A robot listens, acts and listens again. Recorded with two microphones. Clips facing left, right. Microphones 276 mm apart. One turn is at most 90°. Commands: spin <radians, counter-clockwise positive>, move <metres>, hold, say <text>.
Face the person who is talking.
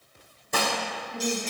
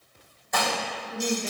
spin -1.57
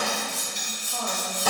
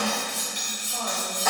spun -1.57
hold
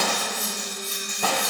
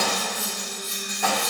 hold
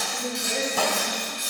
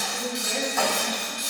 say Facing the woman speaking, over 4 m away.